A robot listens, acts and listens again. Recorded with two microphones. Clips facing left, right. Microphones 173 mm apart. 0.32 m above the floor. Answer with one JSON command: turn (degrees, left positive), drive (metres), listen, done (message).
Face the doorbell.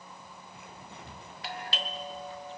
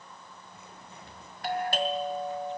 {"turn": -50}
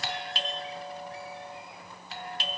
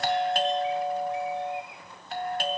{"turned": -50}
{"turn": -70}
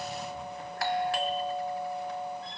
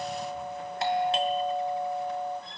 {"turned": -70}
{"turn": -25}
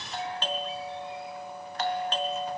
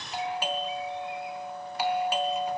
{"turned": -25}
{"turn": -10}
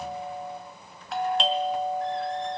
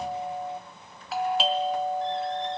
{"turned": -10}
{"done": "Found it: a doorbell, straight ahead, 2 to 4 m away."}